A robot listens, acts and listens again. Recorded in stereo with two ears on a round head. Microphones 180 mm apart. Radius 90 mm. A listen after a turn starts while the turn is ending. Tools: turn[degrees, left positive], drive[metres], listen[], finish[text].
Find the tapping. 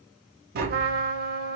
Thought: The tapping: about 45° right or 135° right.
Action: turn[-45]
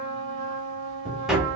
Action: finish[Facing the tapping.]